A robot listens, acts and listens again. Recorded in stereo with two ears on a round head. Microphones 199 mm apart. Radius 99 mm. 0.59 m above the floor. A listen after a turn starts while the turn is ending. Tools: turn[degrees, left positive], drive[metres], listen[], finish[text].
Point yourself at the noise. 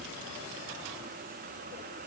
Action: listen[]
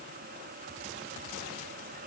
Action: listen[]
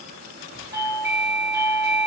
Action: turn[-30]
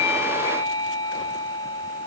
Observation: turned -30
Thought: So it is at 15° left.
Action: turn[15]
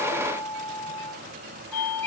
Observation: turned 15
Action: finish[Found it: a doorbell, straight ahead, over 4 m away.]